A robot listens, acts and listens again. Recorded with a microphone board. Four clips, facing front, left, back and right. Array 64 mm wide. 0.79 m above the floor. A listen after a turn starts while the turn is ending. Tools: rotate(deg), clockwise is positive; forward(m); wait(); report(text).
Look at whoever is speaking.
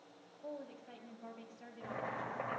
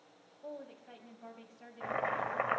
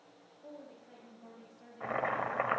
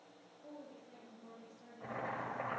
rotate(-65)
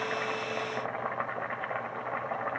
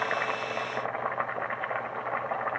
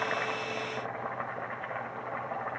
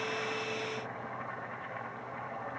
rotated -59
wait()
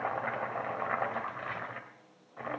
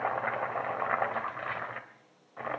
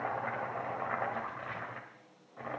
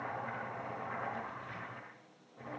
wait()
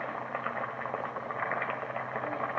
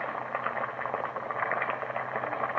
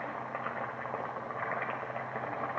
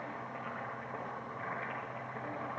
report("I heard a woman speaking from this way, but can't make it out now.")